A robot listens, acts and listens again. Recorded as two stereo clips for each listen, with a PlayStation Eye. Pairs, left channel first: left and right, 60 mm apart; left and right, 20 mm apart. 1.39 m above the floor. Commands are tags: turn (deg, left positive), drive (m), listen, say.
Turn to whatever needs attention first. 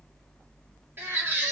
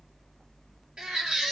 <turn deg="-35"/>
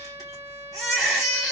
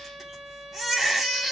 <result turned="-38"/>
<say>Found it: a baby crying, straight ahead, 1 to 2 m away.</say>